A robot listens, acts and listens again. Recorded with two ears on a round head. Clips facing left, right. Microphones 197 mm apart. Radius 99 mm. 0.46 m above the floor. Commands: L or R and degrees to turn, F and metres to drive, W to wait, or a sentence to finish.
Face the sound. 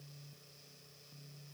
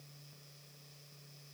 W
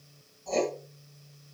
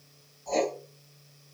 L30
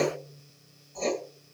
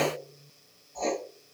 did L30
L140
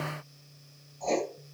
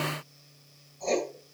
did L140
R25
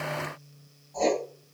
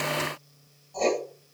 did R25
Found it: writing, straight ahead, 1 to 2 m away.